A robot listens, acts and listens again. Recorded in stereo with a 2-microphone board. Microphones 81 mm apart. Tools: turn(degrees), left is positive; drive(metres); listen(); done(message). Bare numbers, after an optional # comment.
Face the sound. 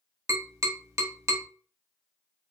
# The tapping: about 40° right or 140° right.
turn(-40)
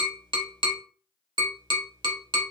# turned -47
# So it is at 95° right.
turn(-95)
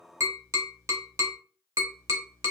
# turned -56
# The tapping is now 40° right.
turn(-40)
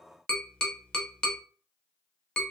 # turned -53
# The tapping is now 10° left.
turn(10)
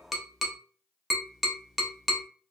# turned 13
done("Facing the tapping.")